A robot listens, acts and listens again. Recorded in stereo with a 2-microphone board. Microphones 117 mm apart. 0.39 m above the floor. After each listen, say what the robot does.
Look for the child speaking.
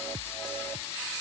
Keep listening.
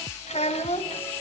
Turn 65° left.
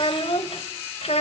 Turn 60° left.
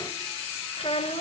Turn 60° left.
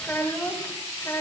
Turn 25° left.
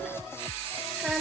Found it: a child speaking, straight ahead, 1 to 2 m away.